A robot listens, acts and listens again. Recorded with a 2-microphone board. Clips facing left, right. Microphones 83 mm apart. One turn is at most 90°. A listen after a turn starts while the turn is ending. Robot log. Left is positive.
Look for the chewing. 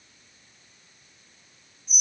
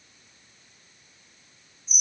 cmd idle
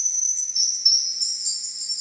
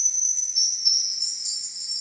cmd idle
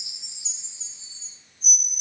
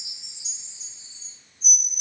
end: I can't make out chewing, only a chime.